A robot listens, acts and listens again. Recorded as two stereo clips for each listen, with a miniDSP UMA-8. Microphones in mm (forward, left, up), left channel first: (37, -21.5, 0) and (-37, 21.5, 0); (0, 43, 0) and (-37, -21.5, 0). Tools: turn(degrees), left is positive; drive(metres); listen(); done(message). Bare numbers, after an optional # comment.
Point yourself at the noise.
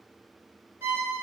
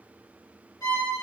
# The violin: 80° left.
turn(80)
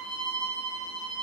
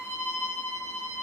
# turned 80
done("Facing the violin.")